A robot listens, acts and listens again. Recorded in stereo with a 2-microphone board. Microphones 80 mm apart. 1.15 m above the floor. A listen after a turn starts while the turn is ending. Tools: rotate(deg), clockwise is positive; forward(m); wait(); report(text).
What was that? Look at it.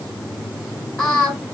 rotate(-30)
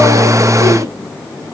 wait()
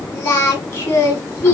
rotate(-135)
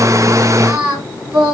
rotate(25)
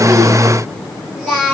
rotate(10)
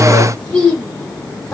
report("Found it: singing, straight ahead, 1 to 2 m away.")